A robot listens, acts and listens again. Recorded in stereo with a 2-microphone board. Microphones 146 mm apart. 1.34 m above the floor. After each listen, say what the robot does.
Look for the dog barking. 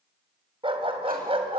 Turn 40° right.
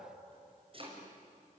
Keep listening.
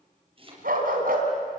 Turn 105° right.
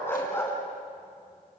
Turn 15° left.
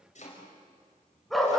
Facing the dog barking.